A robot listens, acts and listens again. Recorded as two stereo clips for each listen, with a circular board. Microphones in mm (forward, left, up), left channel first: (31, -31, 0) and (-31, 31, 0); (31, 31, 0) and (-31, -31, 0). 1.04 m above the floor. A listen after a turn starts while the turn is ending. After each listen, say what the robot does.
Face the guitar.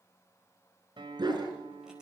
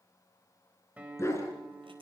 Turn 155° left.
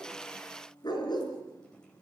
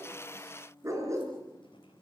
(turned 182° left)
Turn 30° right.
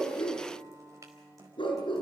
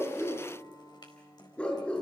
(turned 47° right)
Turn 20° left.
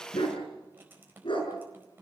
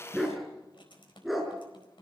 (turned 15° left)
Keep listening.
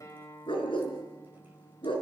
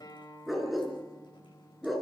Facing the guitar, over 4 m away.